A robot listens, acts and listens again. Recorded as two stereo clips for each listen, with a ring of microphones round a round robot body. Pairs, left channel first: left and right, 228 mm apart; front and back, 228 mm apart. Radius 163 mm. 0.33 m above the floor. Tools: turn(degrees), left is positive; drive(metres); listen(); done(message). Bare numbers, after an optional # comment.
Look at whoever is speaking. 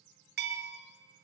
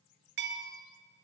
listen()
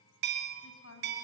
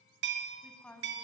# The woman speaking: 80° left.
turn(80)
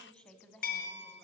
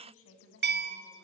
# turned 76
done("Facing the woman speaking.")